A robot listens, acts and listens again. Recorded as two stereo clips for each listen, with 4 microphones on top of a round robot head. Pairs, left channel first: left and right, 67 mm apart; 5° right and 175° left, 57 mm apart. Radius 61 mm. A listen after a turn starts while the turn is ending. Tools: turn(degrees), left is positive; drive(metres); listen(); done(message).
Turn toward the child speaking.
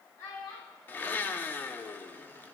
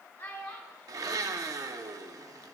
turn(degrees=50)
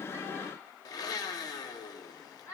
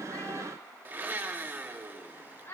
turn(degrees=35)
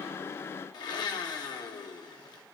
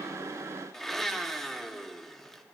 listen()
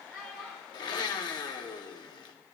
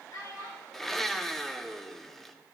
done("Found it: a child speaking, straight ahead, 2 to 4 m away.")